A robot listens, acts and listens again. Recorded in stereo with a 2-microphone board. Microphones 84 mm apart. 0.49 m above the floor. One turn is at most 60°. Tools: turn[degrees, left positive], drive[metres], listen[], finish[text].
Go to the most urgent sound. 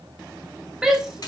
Action: turn[-30]
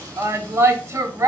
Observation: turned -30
Thought: So it is at 145° right.
Action: turn[-60]
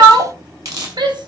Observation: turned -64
Thought: The shout is now 80° right.
Action: turn[-60]
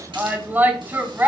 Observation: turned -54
Thought: The shout is now 25° right.
Action: turn[-25]
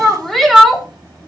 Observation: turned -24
Action: drive[1.0]
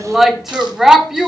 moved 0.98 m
Action: drive[1.0]
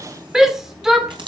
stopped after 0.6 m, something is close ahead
Thought: The shout is now 10° right.
Action: turn[-10]
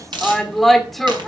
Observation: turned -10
Action: finish[Arrived at the shout, straight ahead.]